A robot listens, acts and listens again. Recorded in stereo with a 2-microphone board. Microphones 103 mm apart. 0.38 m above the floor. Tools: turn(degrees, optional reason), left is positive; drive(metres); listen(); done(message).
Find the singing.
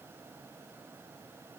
listen()
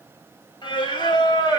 turn(degrees=40, reason="The singing: about 40° left or 140° left.")
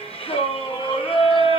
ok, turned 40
turn(degrees=115, reason="So it is at 115° left.")
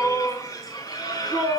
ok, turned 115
turn(degrees=40, reason="The singing is now 40° left.")
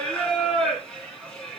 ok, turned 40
done("Facing the singing.")